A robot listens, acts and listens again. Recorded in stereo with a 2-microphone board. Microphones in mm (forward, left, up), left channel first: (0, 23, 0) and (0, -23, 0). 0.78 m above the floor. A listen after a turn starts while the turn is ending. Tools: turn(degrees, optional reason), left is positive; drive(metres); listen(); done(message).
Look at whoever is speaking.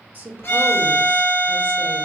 turn(degrees=-30, reason="The woman speaking: about 30° right or 150° right.")
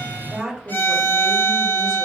done("Facing the woman speaking.")